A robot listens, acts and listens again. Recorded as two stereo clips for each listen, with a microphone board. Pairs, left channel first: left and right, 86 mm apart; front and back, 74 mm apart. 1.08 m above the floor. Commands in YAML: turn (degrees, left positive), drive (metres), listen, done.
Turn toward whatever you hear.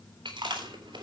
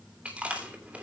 turn: -105
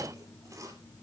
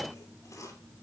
turn: -40
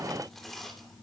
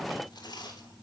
done: "Found it: chewing, straight ahead, 2 to 4 m away."